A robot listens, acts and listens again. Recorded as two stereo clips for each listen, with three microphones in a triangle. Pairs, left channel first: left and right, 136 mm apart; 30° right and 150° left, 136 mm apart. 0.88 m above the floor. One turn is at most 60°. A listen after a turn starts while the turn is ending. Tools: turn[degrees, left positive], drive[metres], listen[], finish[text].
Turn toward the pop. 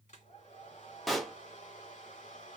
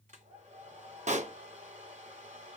Thought: The pop: straight behind.
Action: turn[60]
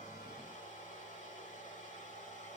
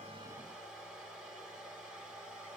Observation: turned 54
Thought: Nothing new. It was at 125° left.
Action: turn[60]
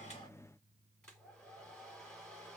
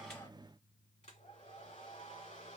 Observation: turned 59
Thought: Nothing new. It was at 65° left.
Action: turn[60]
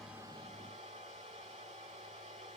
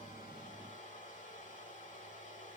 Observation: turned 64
Action: finish[Facing where the pop came from. I can't hear it now.]